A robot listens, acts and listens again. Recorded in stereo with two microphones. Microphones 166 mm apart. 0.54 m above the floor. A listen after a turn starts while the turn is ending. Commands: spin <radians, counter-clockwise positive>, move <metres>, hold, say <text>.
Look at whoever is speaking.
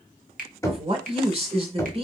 spin -0.61
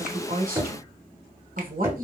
spin -1.83
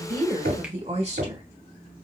spin -0.79
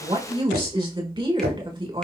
spin -0.52
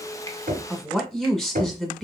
say Found it: a woman speaking, straight ahead.